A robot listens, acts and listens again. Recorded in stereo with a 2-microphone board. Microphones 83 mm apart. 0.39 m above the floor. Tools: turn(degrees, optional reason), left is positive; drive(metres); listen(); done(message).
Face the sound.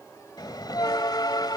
turn(degrees=55, reason="The bell: about 55° left or 125° left.")
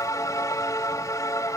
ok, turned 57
turn(degrees=50, reason="So it is at 50° left.")
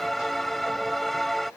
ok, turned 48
done("Found it: a bell, straight ahead.")